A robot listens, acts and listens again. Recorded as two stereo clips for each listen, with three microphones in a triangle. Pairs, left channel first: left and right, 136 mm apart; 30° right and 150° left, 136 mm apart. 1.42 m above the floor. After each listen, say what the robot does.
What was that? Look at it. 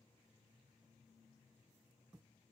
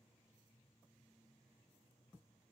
Keep listening.
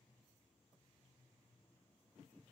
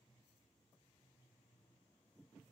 Keep listening.
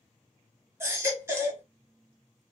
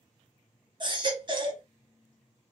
Turn 160° right.
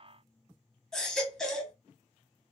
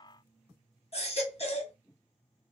Found it: a baby crying, straight ahead.